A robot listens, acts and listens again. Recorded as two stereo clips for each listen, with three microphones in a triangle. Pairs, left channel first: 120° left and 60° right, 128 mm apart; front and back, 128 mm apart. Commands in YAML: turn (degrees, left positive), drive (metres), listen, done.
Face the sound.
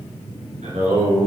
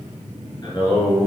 turn: -60
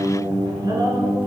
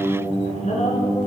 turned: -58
turn: -10
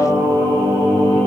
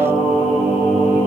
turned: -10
turn: -15
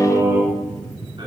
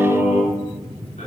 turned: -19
done: "Facing the singing, 2 to 4 m away."